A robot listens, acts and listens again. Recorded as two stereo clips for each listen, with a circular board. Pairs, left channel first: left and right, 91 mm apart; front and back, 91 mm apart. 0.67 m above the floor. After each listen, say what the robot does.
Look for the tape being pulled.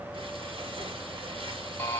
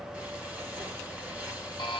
Keep listening.
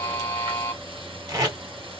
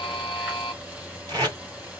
Turn 135° right.
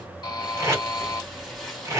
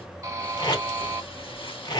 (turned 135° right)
Turn 30° right.
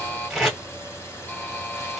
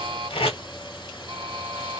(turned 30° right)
Found it: tape being pulled, straight ahead.